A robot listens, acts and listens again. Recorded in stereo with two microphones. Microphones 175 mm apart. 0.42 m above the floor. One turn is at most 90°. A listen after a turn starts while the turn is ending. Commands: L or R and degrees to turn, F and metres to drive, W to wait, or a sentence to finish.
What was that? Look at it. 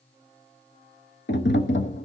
L90
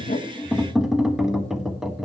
Found it: tapping, straight ahead.